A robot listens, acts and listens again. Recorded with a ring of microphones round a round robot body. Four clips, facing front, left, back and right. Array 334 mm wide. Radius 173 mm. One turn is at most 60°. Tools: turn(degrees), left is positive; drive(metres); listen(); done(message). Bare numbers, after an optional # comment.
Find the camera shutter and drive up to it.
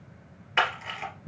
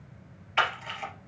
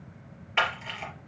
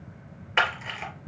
# The camera shutter: 70° right.
turn(-60)
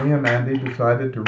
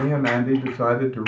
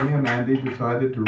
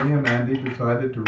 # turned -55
# The camera shutter is now 15° right.
turn(-15)
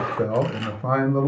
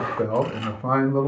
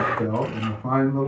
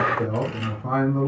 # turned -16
listen()
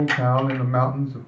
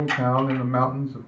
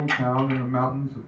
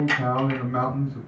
drive(1.0)
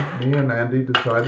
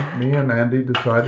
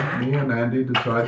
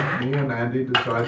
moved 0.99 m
drive(1.0)
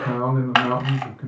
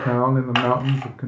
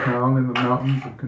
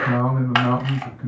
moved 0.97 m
drive(1.0)
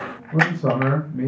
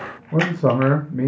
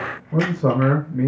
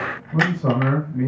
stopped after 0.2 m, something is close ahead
# The camera shutter is now 15° right.
turn(-15)
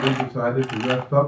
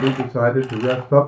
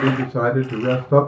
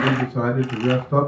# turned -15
listen()
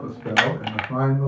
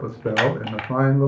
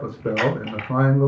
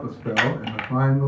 done("I am next to the camera shutter.")